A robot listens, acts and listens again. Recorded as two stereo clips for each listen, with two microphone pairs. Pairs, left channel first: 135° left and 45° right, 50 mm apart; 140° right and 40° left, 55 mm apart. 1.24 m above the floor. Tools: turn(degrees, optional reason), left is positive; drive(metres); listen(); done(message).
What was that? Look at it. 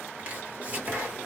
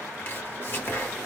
turn(degrees=-100, reason="The chopping: 100° right.")
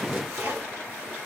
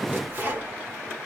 turn(degrees=-15, reason="The chopping is now 15° right.")
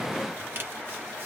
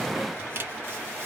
done("Found it: chopping, straight ahead.")